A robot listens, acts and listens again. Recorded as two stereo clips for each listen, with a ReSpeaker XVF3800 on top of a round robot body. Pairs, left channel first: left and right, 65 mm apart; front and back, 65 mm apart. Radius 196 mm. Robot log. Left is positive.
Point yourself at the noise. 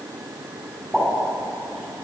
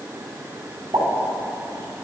note: The pop: straight behind.
cmd yaw +180
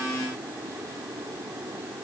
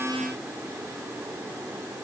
end: I heard a pop from this way, but can't make it out now.